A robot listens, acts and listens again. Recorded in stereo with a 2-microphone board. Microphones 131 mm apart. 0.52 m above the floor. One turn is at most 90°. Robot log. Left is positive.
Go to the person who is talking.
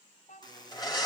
note: The child speaking: about 70° left or 110° left.
cmd yaw +70
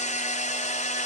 cmd idle
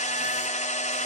cmd idle
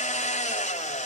end: I heard a child speaking, but can't make it out now. It was about straight ahead or 40° left. I did not reach it.